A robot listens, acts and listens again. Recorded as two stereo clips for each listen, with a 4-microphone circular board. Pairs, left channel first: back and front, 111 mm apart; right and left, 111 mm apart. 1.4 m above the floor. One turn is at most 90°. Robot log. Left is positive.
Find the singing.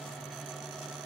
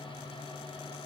cmd idle
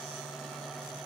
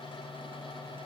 cmd idle
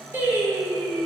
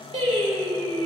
note: The singing: 70° left.
cmd yaw +70
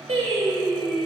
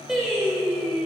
end: Facing the singing.